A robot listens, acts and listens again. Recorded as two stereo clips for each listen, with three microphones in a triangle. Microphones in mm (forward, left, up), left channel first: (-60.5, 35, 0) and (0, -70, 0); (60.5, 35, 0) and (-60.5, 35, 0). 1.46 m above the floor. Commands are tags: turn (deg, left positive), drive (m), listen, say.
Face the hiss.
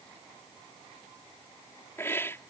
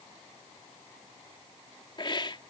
<turn deg="50"/>
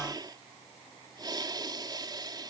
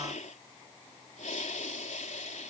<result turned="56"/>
<say>Found it: a hiss, straight ahead.</say>